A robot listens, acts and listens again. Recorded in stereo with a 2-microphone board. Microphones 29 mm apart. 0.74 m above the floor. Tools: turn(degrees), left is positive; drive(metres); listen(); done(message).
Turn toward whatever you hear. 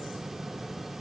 listen()
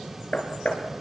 turn(degrees=55)
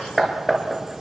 done("Found it: hammering, straight ahead.")